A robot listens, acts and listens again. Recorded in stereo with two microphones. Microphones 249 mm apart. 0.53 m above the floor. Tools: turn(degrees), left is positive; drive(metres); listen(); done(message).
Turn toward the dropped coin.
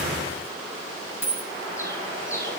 turn(degrees=50)
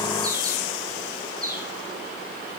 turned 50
listen()
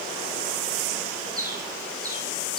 done("I heard a dropped coin, but can't make it out now. It was about straight ahead or 80° left.")